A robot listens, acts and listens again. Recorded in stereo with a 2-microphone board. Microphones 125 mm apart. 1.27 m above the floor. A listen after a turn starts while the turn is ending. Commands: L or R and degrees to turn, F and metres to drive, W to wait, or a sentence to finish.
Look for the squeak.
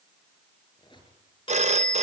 L40
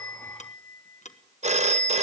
W
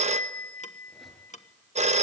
W
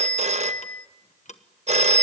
I heard a squeak, but can't make it out now. It was about straight ahead or 100° left.